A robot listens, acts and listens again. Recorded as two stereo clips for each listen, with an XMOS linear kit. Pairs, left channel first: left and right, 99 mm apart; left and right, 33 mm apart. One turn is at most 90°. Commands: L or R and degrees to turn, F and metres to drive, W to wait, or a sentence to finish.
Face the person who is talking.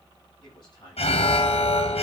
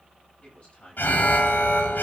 L50
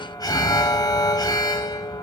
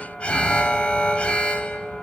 W
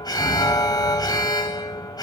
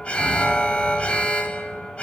W
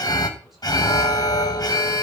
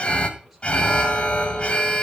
I heard a man speaking, but can't make it out now. It was about straight ahead or 80° left.